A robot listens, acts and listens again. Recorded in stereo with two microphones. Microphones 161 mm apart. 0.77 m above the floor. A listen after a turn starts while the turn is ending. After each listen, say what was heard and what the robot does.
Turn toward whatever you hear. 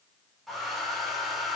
Turn 30° left.
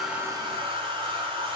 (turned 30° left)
So it is at 30° right. Turn 30° right.
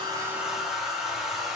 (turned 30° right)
Facing the hair dryer.